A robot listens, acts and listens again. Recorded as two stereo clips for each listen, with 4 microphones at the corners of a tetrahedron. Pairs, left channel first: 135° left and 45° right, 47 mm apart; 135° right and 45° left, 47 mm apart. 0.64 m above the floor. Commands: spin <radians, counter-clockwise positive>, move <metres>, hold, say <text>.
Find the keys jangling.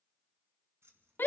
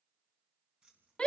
spin -0.44
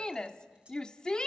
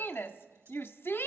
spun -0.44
hold
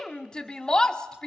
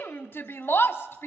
hold
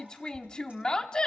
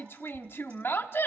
say Facing where the keys jangling came from. I can't hear it now.